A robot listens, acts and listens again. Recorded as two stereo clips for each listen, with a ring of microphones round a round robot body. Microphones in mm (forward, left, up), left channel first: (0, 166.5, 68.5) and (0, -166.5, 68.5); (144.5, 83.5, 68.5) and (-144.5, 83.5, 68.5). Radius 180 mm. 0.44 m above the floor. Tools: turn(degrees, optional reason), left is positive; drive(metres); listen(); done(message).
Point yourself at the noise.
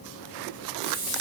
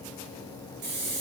turn(degrees=-165, reason="The hiss: 165° right.")
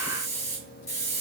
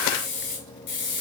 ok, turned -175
turn(degrees=10, reason="The hiss is now 10° left.")
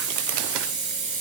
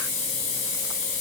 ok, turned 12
done("Found it: a hiss, straight ahead.")